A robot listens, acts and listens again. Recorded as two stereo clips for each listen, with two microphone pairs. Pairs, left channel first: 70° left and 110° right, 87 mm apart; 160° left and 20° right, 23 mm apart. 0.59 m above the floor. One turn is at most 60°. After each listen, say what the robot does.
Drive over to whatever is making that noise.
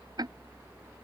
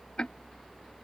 Turn 60° right.
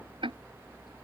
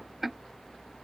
Turn 60° right.
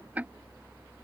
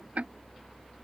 Turn 40° right.
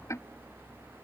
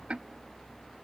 Turn 15° left.
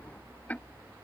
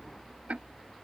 Drive 1.0 m forward.
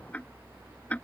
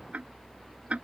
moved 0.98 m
Drive 1.0 m forward.
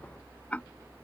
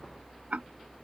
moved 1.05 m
Drive 1.0 m forward.
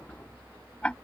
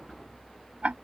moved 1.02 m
Drive 1.0 m forward.
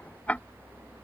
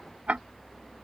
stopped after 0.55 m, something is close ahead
I am next to the ticking.